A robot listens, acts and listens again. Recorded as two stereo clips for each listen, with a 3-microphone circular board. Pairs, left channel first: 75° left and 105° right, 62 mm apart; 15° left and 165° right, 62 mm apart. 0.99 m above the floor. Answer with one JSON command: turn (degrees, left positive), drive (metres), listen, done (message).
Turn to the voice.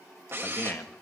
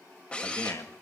{"turn": 25}
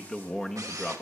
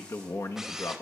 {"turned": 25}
{"done": "Facing the man speaking, 1 to 2 m away."}